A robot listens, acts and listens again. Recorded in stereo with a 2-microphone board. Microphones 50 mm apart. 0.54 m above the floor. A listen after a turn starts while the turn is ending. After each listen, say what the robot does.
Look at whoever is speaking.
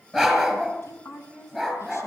Turn 65° left.
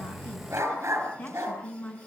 Turn 40° left.
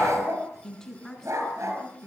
Found it: a woman speaking, straight ahead, over 4 m away.